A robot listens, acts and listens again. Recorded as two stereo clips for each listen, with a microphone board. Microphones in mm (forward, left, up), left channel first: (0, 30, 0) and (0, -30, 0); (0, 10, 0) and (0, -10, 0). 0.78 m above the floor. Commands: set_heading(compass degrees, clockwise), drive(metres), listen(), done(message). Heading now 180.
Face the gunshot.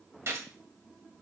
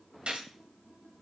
set_heading(230)
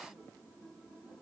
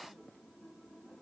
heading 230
listen()
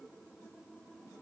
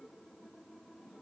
done("I heard a gunshot, but can't make it out now. It was about straight ahead or 80° right.")